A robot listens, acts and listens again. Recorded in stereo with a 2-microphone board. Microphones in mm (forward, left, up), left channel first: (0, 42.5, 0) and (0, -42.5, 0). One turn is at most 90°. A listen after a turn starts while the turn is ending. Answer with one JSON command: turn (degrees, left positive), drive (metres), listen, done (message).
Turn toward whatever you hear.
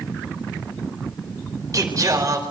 {"turn": -40}
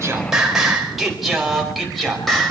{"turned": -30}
{"done": "Facing the singing."}